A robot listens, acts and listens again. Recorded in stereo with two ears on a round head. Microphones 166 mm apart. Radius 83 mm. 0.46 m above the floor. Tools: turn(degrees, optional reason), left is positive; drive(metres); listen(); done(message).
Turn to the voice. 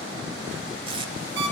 listen()
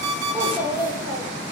turn(degrees=-30)
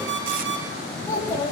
turn(degrees=20, reason="So it is at 20° left.")
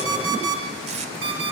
listen()
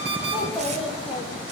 done("Facing the child speaking, over 4 m away.")